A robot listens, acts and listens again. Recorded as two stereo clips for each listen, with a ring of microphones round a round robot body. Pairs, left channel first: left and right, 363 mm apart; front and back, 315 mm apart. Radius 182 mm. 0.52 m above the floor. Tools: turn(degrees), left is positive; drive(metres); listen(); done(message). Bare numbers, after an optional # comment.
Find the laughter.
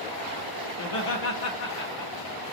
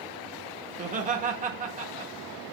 # The laughter: 115° left.
turn(115)
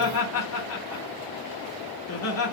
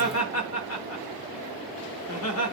# The laughter is now 40° left.
turn(40)
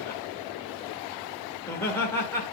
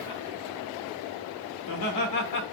done("Facing the laughter.")